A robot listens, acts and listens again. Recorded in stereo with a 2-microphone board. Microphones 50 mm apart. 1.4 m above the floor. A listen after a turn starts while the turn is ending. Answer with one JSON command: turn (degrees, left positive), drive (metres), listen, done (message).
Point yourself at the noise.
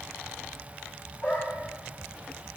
{"turn": 25}
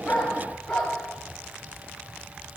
{"turn": 30}
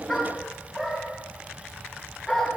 {"done": "Facing the dog barking."}